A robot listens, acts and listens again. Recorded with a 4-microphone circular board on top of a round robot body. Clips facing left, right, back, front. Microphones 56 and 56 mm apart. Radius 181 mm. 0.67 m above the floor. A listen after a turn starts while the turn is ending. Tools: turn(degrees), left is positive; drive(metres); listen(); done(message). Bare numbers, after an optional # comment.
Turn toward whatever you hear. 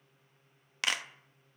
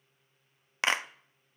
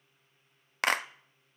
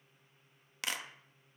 # The clap: 145° right.
turn(-145)
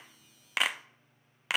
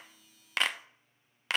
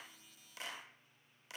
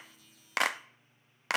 done("Facing the clap.")